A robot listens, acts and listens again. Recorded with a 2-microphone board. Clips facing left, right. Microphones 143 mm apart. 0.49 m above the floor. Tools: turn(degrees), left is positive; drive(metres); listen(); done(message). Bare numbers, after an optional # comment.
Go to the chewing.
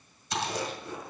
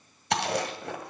# The chewing: about 70° right or 110° right.
turn(-70)
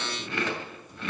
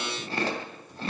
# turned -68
# So it is at 35° right.
turn(-35)
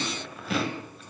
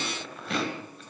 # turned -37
drive(1.0)
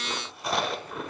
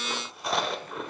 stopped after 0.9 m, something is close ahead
done("Arrived at the chewing, straight ahead.")